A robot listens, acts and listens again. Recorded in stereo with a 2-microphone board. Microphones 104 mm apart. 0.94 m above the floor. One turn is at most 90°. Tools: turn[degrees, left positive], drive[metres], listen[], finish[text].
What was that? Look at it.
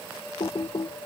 Thought: The typing on a keyboard: about 60° left or 120° left.
Action: turn[60]
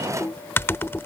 Thought: So it is at 25° left.
Action: turn[25]
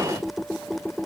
Action: finish[Facing the typing on a keyboard.]